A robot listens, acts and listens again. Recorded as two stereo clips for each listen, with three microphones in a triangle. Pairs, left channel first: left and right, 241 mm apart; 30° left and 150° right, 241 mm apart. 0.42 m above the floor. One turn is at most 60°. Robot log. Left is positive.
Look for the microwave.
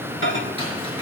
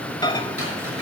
note: The microwave: 95° left.
cmd yaw +60
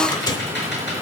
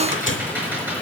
note: The microwave is now 20° left.
cmd yaw +20
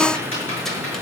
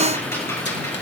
cmd idle
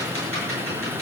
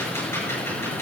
cmd idle
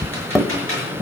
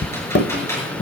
end: Facing the microwave, 1 to 2 m away.